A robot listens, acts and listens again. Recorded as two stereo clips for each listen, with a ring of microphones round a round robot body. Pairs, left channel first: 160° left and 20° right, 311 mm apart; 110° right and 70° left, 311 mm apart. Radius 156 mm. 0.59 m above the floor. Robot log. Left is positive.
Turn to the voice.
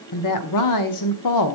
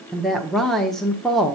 note: The woman speaking: 160° left.
cmd yaw +160
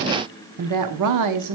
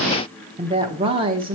end: Facing the woman speaking.